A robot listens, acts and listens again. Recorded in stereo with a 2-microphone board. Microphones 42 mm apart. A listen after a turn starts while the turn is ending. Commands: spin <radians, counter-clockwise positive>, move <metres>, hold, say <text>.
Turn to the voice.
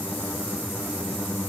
hold
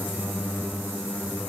hold
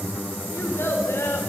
spin 1.13
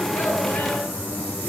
hold
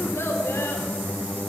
spin 1.22
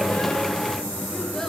hold
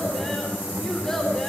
say Found it: a child speaking, straight ahead.